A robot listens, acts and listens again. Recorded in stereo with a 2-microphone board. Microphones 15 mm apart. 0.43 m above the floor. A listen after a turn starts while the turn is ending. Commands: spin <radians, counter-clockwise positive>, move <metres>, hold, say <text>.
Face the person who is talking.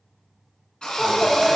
spin 0.52
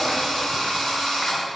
hold
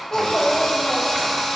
spin 2.36
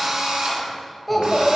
say Facing the child speaking.